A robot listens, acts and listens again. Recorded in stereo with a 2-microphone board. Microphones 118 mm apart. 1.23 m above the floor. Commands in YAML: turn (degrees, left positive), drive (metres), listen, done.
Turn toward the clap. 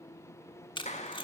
turn: 75
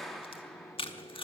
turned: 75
done: "Found it: a clap, straight ahead."